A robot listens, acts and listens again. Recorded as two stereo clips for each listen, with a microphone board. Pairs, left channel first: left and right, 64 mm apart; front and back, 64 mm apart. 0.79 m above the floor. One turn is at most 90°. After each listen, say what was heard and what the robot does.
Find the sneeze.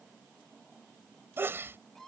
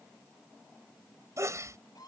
The sneeze: 145° right. Turn 90° right.
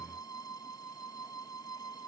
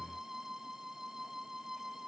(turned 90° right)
Nothing new. It was at 55° right. Turn 55° right.
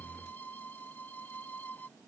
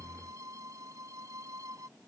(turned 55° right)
I heard a sneeze from this way, but can't make it out now.